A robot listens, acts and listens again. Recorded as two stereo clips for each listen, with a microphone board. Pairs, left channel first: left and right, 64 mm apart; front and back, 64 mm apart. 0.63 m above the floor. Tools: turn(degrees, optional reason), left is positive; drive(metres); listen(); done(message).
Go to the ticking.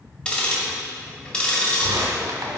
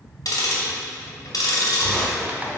turn(degrees=15, reason="The ticking: 15° left.")
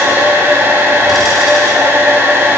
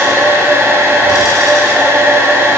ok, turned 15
listen()
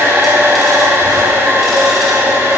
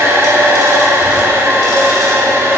listen()
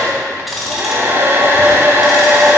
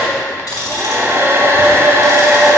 drive(metres=1.0)
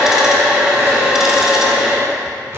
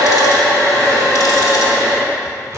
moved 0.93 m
listen()
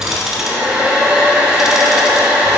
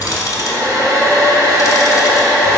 turn(degrees=-10, reason="The ticking is now 10° right.")
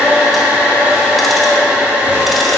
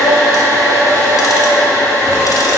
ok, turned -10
listen()
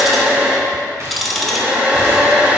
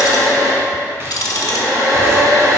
drive(metres=1.0)
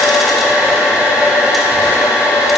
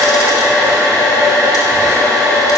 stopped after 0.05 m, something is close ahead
listen()
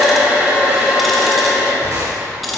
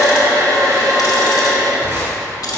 done("Arrived at the ticking, straight ahead.")